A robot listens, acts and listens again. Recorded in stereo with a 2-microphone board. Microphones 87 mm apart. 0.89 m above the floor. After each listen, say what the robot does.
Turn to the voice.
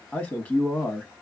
Turn 20° left.
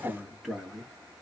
Facing the man speaking, 1 to 2 m away.